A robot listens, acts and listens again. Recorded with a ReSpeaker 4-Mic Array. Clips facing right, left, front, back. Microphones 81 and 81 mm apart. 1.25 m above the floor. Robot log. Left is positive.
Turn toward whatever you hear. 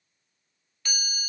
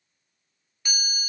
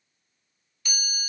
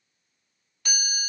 note: The chime: 165° left.
cmd yaw +165
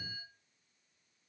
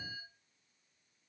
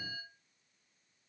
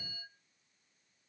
end: Facing the chime.